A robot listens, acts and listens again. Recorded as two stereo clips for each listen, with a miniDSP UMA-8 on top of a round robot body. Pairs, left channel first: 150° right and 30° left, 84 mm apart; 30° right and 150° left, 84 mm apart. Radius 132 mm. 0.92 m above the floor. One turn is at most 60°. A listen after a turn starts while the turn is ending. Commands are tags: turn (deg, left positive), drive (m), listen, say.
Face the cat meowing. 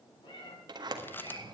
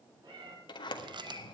<turn deg="-60"/>
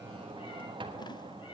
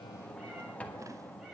<turn deg="-60"/>
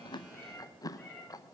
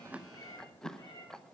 <turn deg="-60"/>
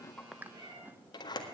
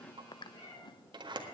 <say>Facing the cat meowing, over 4 m away.</say>